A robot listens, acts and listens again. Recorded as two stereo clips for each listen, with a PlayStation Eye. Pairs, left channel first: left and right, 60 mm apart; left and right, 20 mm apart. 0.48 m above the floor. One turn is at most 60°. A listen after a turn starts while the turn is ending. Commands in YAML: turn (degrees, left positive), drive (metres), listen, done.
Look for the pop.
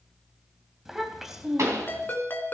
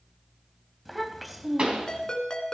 turn: -55
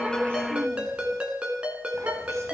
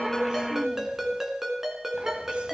listen: true
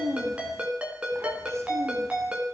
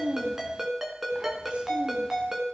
done: "I heard a pop, but can't make it out now. It was about straight ahead or 70° right."